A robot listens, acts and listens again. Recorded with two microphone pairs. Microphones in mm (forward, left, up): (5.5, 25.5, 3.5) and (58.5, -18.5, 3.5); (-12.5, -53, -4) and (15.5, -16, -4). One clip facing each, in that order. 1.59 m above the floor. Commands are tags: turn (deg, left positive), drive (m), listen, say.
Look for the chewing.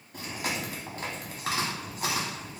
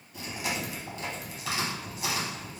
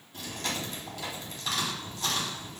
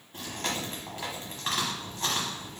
<turn deg="105"/>
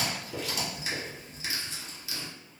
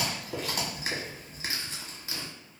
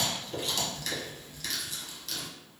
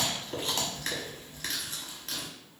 <say>Facing the chewing.</say>